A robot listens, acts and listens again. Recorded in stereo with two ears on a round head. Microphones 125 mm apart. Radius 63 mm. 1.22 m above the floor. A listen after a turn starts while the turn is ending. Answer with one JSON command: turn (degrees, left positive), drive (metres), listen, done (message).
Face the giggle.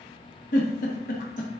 {"turn": 60}
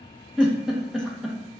{"done": "Facing the giggle, 1 to 2 m away."}